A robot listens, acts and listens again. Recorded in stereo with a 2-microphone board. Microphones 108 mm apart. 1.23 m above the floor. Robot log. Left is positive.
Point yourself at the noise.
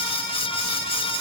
cmd idle
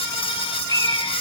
note: The bird: about 35° left or 145° left.
cmd yaw +35
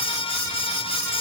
cmd idle
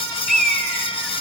end: Found it: a bird, straight ahead, over 4 m away.